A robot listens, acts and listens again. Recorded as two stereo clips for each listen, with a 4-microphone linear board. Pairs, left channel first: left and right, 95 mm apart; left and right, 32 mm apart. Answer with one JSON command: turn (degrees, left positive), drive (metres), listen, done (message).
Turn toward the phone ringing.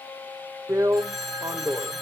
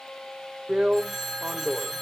{"turn": 30}
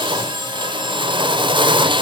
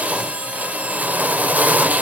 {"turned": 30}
{"listen": true}
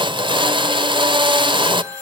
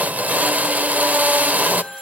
{"turn": -30}
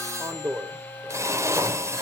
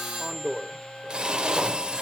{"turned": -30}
{"listen": true}
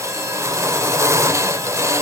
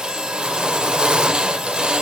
{"listen": true}
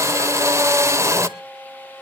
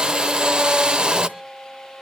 {"done": "Facing where the phone ringing came from. I can't hear it now."}